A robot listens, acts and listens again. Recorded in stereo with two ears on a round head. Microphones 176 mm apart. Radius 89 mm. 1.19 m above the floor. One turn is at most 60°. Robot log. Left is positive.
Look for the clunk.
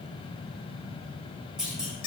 cmd yaw -30
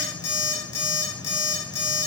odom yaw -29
cmd idle
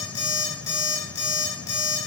end: I heard a clunk, but can't make it out now. It was about 25° left or 150° right.